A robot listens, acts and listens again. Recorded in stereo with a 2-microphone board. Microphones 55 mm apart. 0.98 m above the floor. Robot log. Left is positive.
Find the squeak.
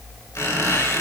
note: The squeak: about 70° left or 110° left.
cmd yaw +70
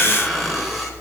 end: Facing the squeak, 2 to 4 m away.